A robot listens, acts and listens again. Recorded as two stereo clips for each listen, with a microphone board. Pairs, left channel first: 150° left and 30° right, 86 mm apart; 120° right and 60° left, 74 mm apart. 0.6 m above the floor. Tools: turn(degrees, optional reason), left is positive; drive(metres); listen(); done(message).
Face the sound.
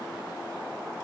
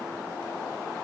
listen()
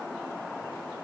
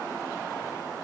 listen()
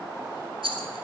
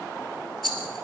turn(degrees=-35, reason="The rattle: 35° right.")
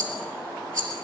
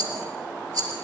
turn(degrees=20, reason="The rattle is now 20° left.")
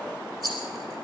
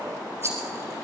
done("Found it: a rattle, straight ahead, 2 to 4 m away.")